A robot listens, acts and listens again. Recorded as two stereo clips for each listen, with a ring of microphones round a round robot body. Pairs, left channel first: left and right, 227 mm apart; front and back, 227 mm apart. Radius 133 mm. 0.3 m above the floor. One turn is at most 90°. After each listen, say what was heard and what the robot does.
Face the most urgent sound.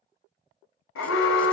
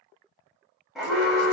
The alarm: 90° left. Turn 90° left.
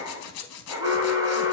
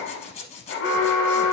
The alarm is now 15° right. Turn 15° right.
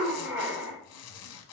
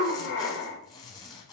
The alarm is now 10° right. Turn 10° right.
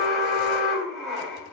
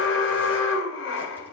Facing the alarm.